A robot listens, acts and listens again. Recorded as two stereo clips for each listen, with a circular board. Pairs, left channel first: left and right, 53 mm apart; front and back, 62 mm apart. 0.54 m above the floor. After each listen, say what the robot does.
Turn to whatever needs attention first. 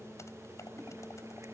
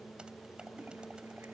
Keep listening.
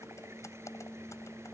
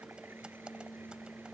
Keep listening.
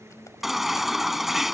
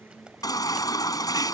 Found it: a baby crying, straight ahead.